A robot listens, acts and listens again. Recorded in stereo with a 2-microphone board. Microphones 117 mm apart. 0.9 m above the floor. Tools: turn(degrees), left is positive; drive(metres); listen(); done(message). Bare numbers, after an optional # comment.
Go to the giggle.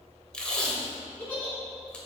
turn(30)
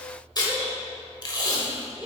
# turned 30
# So it is at 15° right.
turn(-15)
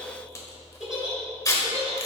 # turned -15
drive(1.0)
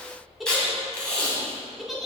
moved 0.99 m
drive(1.0)
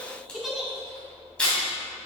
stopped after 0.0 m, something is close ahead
done("Arrived at the giggle, straight ahead.")